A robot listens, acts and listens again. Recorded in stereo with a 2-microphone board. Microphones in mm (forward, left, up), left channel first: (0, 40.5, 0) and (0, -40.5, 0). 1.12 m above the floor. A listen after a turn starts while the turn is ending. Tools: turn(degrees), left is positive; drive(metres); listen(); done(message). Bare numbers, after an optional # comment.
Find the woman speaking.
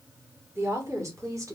# The woman speaking: about 45° right or 135° right.
turn(-45)
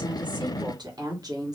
# The woman speaking: about 50° right or 130° right.
turn(-50)
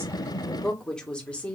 # So it is at 15° left.
turn(15)
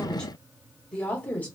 # The woman speaking is now 20° left.
turn(20)
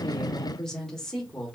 done("Found it: a woman speaking, straight ahead, 1 to 2 m away.")